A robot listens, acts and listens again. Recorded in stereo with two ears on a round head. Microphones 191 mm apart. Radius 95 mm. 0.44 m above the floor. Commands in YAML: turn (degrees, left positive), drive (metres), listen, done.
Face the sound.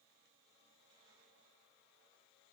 listen: true
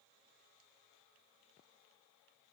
listen: true
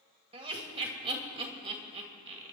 turn: -25
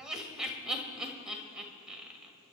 done: "Facing the laughter, 2 to 4 m away."